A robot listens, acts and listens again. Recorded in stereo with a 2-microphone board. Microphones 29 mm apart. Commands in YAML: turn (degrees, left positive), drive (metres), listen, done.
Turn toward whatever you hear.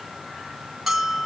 turn: -30
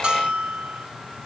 turn: -135
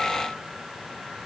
listen: true
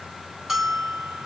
turn: -10
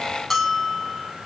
done: "Found it: a bell, straight ahead."